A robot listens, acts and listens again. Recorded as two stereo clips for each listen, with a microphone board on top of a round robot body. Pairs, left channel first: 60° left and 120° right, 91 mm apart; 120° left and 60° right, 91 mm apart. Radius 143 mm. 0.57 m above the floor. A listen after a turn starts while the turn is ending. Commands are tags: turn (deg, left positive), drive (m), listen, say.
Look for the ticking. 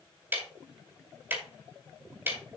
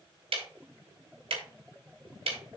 <turn deg="-50"/>
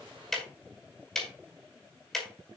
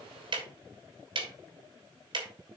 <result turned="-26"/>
<turn deg="-25"/>
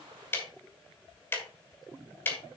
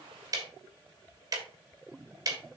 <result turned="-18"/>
<turn deg="-10"/>
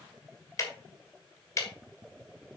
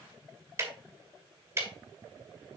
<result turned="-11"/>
<say>Found it: ticking, straight ahead.</say>